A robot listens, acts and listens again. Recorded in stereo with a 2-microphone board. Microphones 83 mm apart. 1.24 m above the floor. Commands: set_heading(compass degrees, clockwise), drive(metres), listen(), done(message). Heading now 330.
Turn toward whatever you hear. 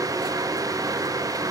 listen()
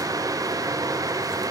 listen()
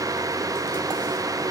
done("I can't make out anything.")